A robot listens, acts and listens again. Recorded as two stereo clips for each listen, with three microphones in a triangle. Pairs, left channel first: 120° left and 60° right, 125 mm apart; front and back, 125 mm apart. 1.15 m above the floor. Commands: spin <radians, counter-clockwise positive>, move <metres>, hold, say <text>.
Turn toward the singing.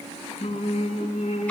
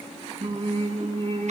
spin 2.62
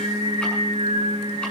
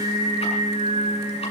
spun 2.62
spin -0.26
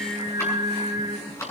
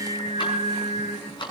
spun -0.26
say Found it: singing, straight ahead, over 4 m away.